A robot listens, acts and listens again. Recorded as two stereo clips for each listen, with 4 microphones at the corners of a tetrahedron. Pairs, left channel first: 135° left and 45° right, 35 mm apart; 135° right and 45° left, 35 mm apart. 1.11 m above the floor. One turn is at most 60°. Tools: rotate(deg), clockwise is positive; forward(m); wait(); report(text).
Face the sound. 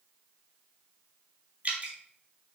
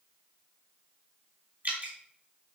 report("Facing the dripping, 2 to 4 m away.")